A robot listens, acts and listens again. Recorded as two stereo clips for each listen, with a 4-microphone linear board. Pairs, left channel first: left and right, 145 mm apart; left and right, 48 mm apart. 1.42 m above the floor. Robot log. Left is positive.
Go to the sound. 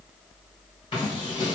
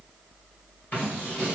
note: The scissors: about 35° left or 145° left.
cmd yaw +35
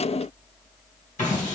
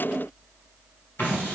note: So it is at 105° left.
cmd yaw +105
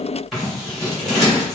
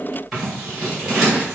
cmd fwd 1.0
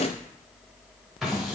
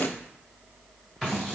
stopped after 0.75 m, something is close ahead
end: Arrived at the scissors, straight ahead.